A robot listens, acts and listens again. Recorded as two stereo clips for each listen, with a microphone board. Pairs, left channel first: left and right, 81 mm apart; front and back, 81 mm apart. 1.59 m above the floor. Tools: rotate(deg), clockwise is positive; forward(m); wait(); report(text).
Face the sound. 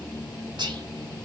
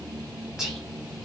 rotate(100)
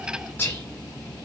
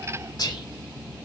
rotate(-25)
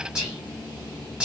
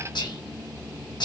rotate(15)
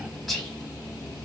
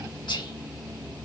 report("Facing the whispering, 1 to 2 m away.")